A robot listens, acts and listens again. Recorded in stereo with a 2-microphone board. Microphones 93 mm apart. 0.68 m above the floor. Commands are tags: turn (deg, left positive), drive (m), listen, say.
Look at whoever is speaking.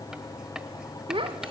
<turn deg="-65"/>
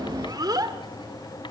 <turn deg="-45"/>
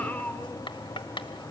<turn deg="20"/>
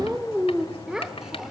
<say>Facing the child speaking.</say>